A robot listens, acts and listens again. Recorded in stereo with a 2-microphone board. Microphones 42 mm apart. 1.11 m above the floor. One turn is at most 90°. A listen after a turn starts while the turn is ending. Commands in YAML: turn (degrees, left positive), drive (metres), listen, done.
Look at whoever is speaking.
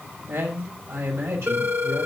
turn: -90
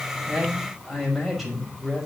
done: "Facing the man speaking."